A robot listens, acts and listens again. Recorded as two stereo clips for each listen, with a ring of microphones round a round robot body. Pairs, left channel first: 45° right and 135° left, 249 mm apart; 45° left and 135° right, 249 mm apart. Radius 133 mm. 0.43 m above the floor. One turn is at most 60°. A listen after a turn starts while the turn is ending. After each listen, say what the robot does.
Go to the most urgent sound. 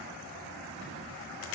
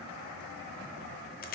Keep listening.
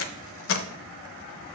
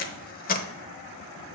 Keep listening.
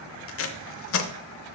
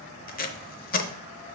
I can't make out anything urgent, only tape being pulled.